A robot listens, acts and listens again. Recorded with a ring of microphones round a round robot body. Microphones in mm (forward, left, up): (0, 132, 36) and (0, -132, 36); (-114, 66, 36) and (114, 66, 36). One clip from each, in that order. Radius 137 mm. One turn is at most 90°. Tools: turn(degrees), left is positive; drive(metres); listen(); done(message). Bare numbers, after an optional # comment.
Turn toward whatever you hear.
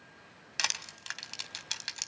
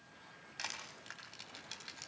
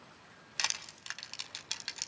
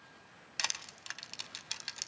# The crushing: 95° left.
turn(90)
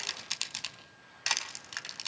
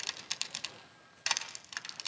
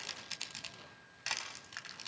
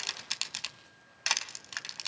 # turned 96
done("Found it: crushing, straight ahead.")